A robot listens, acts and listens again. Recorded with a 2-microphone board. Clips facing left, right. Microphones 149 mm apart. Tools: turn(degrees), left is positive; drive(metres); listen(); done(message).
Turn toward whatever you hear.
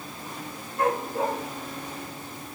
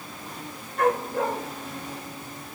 turn(degrees=-75)
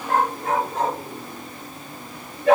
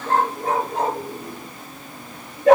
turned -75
turn(degrees=-40)
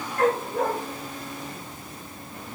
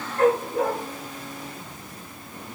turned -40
turn(degrees=-10)
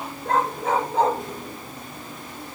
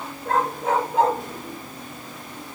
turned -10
done("Facing the dog barking.")